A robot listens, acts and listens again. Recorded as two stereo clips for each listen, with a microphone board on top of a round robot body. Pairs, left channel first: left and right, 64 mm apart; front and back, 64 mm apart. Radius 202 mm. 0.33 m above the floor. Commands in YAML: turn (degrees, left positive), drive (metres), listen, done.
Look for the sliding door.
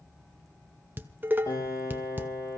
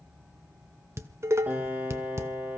listen: true
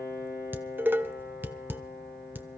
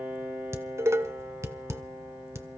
listen: true
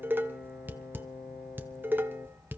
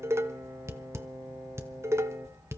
done: "I can't make out a sliding door to turn to."